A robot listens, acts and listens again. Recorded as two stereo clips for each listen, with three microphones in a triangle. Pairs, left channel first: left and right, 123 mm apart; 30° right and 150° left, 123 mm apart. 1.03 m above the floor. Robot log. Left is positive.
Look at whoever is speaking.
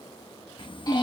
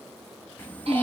note: The child speaking: 45° left.
cmd yaw +45
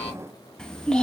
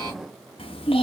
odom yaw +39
end: Found it: a child speaking, straight ahead.